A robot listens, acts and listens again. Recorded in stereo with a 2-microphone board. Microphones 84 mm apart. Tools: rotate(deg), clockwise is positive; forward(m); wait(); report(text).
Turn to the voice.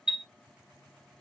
wait()
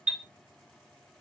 wait()
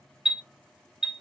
report("I can't make out anyone speaking, only a chime.")